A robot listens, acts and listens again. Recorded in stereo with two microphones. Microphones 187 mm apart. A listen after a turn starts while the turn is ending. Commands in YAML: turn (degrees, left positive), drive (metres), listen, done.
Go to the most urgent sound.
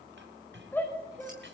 turn: 30
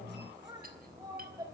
turn: -20
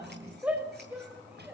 turn: -10
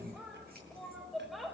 drive: 1.0
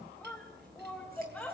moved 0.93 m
drive: 1.0
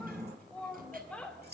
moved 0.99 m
drive: 1.0
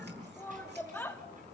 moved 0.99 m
turn: 10
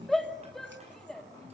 drive: 1.0
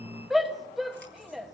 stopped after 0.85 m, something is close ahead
done: "I am next to the shout."